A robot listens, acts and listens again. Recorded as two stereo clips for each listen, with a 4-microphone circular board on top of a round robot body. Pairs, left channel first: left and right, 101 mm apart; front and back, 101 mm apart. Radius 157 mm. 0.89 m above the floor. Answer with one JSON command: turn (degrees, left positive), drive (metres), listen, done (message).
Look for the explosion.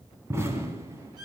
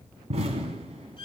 {"turn": -155}
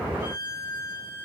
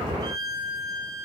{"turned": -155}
{"done": "I heard an explosion from this way, but can't make it out now."}